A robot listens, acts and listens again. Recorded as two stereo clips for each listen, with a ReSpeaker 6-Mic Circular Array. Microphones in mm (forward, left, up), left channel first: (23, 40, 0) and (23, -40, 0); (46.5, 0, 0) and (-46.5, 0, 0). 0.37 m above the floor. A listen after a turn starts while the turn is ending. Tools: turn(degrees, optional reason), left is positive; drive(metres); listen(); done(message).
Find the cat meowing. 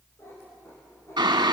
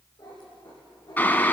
turn(degrees=35, reason="The cat meowing: 35° left.")
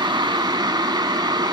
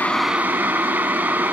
listen()
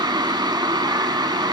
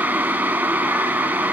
listen()
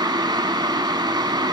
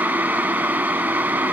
done("I heard a cat meowing from this way, but can't make it out now.")